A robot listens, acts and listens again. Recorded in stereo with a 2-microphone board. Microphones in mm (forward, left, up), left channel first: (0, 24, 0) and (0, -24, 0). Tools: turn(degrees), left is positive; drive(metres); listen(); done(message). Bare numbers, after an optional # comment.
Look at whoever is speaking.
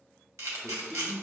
# The man speaking: about 20° left or 160° left.
turn(20)
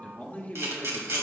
# So it is at 140° left.
turn(140)
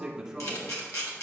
# The man speaking is now 10° right.
turn(-10)
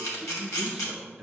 done("Facing the man speaking, 1 to 2 m away.")